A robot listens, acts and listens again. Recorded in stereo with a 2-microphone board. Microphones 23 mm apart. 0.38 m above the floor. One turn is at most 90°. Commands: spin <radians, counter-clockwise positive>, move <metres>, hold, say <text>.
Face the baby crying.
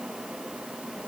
hold
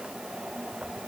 hold
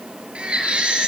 spin -1.05
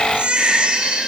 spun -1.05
spin -1.05
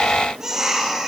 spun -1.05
spin -0.44
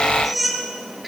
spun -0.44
say Facing the baby crying.